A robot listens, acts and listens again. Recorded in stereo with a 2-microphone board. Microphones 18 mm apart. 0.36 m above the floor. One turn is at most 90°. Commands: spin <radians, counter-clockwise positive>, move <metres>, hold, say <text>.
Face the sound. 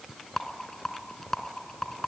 spin 0.61
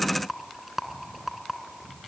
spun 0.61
say Facing the rattle.